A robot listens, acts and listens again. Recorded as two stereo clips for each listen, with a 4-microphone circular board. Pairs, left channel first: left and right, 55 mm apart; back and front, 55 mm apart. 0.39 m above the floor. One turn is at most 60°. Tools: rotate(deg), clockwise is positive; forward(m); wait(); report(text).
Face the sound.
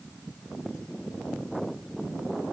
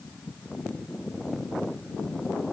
wait()
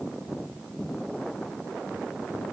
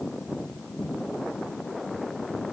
wait()
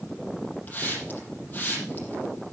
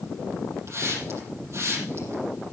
rotate(-30)
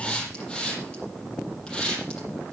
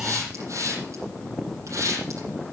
rotate(-15)
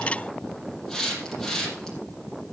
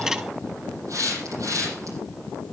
rotate(-10)
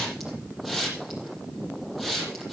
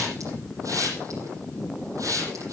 report("Found it: a hiss, straight ahead, over 4 m away.")